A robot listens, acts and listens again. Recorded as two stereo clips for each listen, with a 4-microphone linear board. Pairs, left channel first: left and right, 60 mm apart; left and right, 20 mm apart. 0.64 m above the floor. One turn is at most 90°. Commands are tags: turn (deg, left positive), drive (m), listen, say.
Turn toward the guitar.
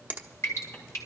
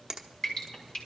<listen/>
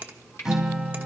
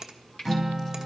<turn deg="-30"/>
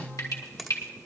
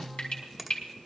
<turn deg="-90"/>
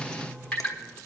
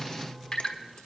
<turn deg="-55"/>
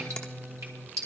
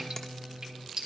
<turn deg="20"/>
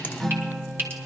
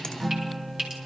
<say>Facing the guitar.</say>